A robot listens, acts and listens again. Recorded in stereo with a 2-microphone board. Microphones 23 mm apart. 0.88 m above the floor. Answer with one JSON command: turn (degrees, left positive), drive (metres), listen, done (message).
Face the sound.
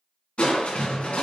{"turn": 55}
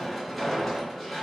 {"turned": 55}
{"done": "Found it: crushing, straight ahead."}